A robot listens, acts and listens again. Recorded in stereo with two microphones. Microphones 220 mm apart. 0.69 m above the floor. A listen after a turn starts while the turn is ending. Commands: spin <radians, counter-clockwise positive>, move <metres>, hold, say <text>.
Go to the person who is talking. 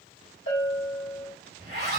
hold
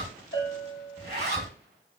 hold
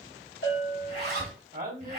spin -0.79
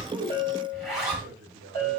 spin -1.57
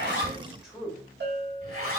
move 1.0
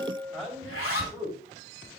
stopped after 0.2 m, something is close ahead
say Blocked. The man speaking is further on, straight ahead.